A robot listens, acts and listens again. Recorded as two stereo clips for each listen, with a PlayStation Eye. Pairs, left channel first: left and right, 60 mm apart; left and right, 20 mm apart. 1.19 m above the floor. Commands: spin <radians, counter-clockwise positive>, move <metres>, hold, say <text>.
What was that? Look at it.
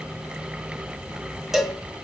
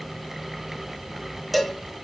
spin -0.52
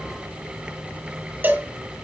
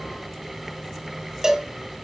spin -2.53
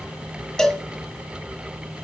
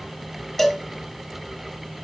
spin 0.17
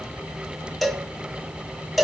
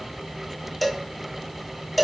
say Facing the cowbell.